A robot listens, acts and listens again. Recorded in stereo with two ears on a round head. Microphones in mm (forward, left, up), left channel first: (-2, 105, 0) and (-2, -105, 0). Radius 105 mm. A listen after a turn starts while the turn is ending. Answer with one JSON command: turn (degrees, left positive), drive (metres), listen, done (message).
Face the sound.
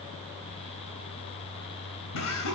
{"turn": 90}
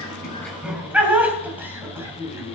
{"turn": -10}
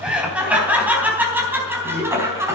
{"turn": -10}
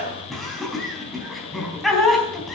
{"done": "Facing the laughter, over 4 m away."}